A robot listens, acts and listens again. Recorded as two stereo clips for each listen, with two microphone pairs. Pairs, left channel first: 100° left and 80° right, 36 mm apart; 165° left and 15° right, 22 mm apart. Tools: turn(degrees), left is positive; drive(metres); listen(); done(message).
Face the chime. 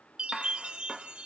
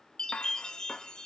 turn(degrees=-140)
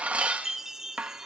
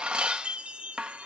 done("Found it: a chime, straight ahead, 1 to 2 m away.")